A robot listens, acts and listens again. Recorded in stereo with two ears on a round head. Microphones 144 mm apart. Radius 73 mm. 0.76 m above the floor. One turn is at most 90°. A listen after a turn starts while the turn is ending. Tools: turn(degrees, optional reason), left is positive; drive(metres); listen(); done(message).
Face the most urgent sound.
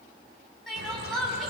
turn(degrees=30)
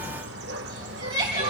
turn(degrees=-25, reason="So it is at 25° right.")
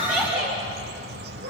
done("Facing the crying, over 4 m away.")